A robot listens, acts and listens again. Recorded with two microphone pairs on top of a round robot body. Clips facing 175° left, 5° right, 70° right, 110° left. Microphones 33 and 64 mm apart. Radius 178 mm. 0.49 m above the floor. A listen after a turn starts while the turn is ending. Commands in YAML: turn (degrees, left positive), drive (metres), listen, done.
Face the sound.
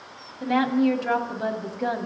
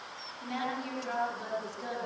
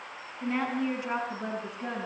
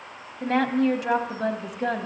turn: 120
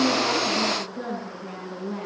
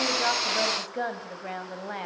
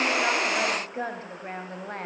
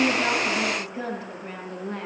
turn: -25
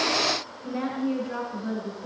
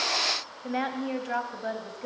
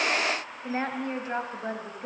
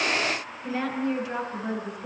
turn: -20
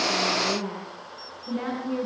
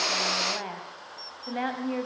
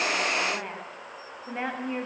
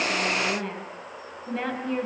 done: "Facing the woman speaking."